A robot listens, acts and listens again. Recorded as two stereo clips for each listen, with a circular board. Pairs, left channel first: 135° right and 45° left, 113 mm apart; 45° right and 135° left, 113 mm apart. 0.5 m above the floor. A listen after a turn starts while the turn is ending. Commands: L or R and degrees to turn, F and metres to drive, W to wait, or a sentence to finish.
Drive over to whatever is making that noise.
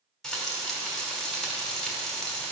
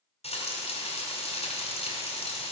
R50
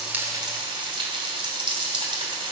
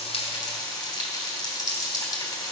L10
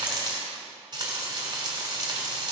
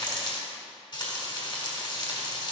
F1.0
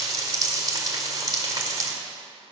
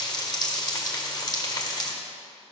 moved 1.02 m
F1.0
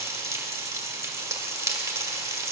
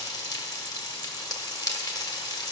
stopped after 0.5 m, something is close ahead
I am next to the frying.